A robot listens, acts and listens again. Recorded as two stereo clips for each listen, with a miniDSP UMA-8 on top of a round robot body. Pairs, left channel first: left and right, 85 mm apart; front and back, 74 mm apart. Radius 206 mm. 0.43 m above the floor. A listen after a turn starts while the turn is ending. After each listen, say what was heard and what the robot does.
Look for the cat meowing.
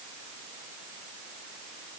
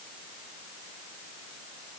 Keep listening.
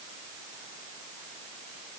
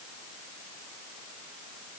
Keep listening.
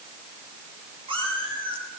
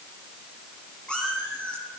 The cat meowing: 75° right. Turn 75° right.
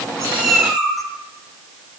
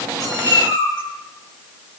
Facing the cat meowing.